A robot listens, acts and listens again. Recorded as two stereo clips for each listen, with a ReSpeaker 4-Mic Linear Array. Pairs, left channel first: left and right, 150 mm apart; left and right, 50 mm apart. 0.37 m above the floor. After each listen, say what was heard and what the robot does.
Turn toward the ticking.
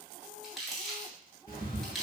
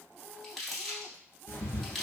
The ticking: about 70° left or 110° left. Turn 70° left.
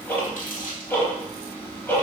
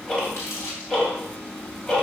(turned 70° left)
So it is at 15° left. Turn 15° left.
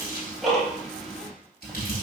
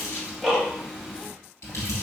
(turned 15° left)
Facing the ticking.